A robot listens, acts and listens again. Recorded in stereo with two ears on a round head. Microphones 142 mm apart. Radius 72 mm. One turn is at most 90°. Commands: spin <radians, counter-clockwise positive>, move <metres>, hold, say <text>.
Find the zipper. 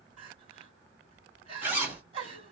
spin -0.52
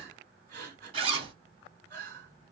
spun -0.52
spin -1.57
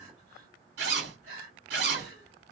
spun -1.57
spin -1.57
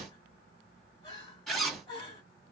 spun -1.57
say Found it: a zipper, straight ahead.